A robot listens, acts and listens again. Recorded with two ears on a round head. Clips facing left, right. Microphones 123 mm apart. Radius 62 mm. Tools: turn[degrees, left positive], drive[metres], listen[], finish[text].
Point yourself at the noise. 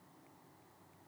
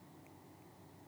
Action: listen[]
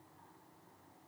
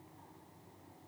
Action: listen[]
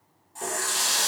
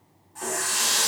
Thought: The running tap: about 30° left or 150° left.
Action: turn[30]
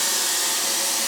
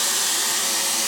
Thought: So it is at 115° left.
Action: turn[115]
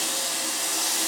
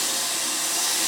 Thought: The running tap is now 35° left.
Action: turn[35]
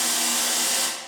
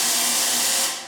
Action: finish[Found it: a running tap, straight ahead, 1 to 2 m away.]